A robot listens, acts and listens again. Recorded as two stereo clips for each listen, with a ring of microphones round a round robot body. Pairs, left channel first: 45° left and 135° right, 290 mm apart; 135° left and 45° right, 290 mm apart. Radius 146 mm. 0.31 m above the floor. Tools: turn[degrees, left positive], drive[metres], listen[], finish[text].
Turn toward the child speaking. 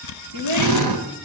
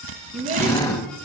Thought: The child speaking: 110° right.
Action: turn[-110]
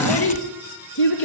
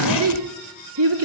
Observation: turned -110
Action: finish[Found it: a child speaking, straight ahead.]